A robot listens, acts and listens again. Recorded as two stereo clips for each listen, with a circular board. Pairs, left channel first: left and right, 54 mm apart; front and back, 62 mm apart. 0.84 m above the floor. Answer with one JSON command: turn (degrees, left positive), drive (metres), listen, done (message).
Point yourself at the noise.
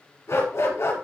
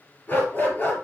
{"turn": 60}
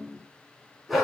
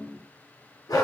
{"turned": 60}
{"done": "Facing the dog barking."}